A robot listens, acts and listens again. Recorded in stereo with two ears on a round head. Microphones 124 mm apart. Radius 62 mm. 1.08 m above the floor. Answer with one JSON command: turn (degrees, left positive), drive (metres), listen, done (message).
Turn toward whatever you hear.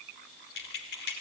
{"turn": 90}
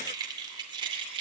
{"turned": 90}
{"turn": -35}
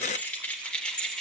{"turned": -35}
{"done": "Found it: keys jangling, straight ahead, 2 to 4 m away."}